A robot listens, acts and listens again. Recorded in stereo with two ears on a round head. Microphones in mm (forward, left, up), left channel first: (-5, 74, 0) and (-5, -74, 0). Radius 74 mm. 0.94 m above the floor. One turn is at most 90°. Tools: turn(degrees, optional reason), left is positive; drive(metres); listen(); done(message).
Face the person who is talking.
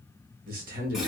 turn(degrees=-60, reason="The man speaking: about 60° right or 120° right.")
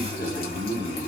turn(degrees=-45, reason="So it is at 45° right.")
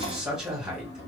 done("Found it: a man speaking, straight ahead.")